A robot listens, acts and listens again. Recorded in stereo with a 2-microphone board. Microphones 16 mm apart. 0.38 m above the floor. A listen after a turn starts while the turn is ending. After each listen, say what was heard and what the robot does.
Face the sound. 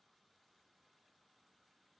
Keep listening.
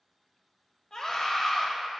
The scream: about 30° left or 150° left. Turn 30° left.
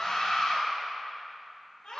So it is at 110° left. Turn 110° left.
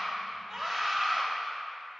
Facing the scream, 1 to 2 m away.